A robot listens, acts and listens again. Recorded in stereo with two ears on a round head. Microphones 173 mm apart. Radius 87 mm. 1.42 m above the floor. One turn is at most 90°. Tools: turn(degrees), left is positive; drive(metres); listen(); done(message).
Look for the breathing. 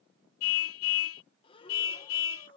turn(degrees=25)
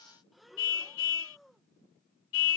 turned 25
done("Facing the breathing.")